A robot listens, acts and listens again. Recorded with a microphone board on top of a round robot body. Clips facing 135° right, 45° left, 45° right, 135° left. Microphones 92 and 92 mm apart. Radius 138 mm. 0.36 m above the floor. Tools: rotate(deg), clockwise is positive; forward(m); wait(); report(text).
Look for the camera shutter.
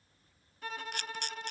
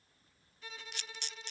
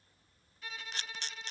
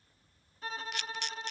rotate(100)
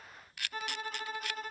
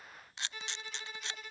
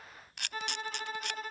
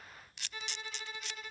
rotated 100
rotate(20)
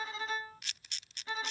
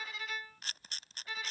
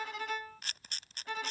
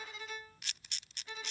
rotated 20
report("Found it: a camera shutter, straight ahead.")